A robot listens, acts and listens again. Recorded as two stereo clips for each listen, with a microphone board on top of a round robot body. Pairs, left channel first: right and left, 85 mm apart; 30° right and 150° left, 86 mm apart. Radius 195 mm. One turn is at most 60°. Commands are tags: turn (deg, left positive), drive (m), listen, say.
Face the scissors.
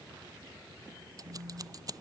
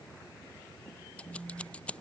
<turn deg="45"/>
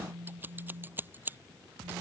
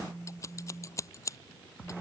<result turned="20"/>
<turn deg="25"/>
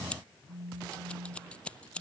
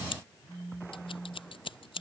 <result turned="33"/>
<turn deg="-10"/>
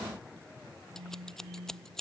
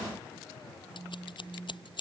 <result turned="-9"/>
<say>Found it: scissors, straight ahead.</say>